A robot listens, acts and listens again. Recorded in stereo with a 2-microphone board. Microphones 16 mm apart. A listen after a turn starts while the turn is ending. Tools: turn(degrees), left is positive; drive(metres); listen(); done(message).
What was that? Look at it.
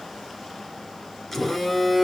turn(degrees=15)
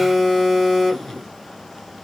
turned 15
turn(degrees=150)
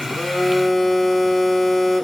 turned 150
turn(degrees=15)
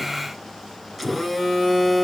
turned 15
done("Facing the phone buzzing.")